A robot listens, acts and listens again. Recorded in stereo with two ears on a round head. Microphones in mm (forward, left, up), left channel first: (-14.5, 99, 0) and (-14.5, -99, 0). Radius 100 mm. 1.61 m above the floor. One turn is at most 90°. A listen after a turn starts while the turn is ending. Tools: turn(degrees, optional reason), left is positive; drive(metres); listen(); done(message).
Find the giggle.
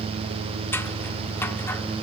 listen()
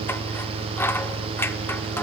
listen()
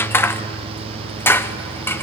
done("I can't make out a giggle to turn to.")